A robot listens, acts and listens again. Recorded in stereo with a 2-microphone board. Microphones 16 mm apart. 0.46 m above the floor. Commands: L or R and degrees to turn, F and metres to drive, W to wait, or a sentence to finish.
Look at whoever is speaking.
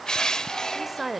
R30
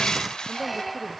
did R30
W
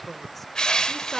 L20
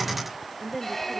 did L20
Found it: a woman speaking, straight ahead.